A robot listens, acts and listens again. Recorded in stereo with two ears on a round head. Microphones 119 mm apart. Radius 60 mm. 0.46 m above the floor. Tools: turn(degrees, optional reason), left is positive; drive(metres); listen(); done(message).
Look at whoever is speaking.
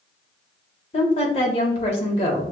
turn(degrees=45, reason="The woman speaking: about 45° left or 135° left.")
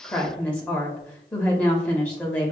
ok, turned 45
turn(degrees=10, reason="So it is at 10° left.")
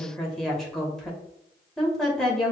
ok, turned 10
done("Found it: a woman speaking, straight ahead.")